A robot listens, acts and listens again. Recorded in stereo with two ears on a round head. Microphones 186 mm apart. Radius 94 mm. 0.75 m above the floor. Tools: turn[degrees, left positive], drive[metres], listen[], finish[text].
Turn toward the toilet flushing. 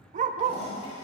Thought: The toilet flushing: about 35° left or 145° left.
Action: turn[35]
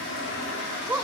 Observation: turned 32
Thought: So it is at 115° left.
Action: turn[115]
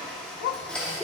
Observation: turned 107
Action: finish[Found it: a toilet flushing, straight ahead, over 4 m away.]